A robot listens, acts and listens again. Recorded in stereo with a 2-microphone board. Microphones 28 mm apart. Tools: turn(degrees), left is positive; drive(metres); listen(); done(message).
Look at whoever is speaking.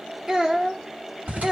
turn(degrees=-20)
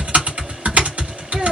listen()
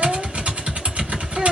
listen()
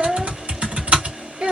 turn(degrees=-135)
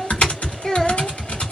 turn(degrees=25)
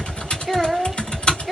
done("Found it: a child speaking, straight ahead, under 1 m away.")